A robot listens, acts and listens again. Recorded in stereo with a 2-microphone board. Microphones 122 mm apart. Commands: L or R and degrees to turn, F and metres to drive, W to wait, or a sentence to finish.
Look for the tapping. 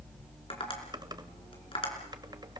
L45
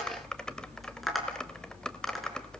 Found it: tapping, straight ahead.